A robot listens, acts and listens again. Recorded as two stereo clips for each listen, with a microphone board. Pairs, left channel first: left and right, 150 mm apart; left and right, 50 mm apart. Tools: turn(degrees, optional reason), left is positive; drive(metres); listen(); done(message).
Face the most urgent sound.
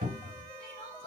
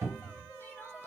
listen()
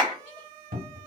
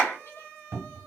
listen()
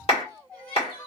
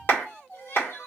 turn(degrees=90)
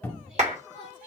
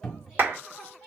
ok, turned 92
listen()
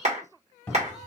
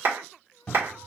listen()
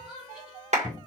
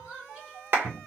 done("Found it: crying, straight ahead.")